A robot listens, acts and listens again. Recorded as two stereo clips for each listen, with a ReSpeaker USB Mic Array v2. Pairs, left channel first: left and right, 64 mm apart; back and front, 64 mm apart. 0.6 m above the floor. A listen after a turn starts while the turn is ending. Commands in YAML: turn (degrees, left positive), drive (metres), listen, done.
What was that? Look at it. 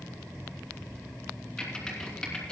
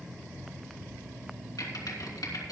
turn: 170
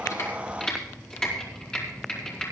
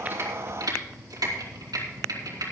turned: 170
turn: 15
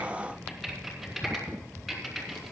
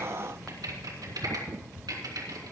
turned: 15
done: "Found it: typing on a keyboard, straight ahead, 2 to 4 m away."